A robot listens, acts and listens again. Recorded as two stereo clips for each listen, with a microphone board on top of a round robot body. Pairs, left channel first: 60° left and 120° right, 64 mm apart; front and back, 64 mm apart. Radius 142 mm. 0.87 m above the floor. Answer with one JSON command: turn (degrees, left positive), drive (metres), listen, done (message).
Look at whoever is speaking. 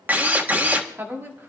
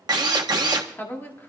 {"turn": -60}
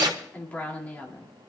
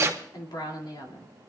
{"turn": -10}
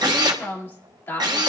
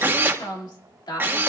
{"done": "Found it: a woman speaking, straight ahead, 2 to 4 m away."}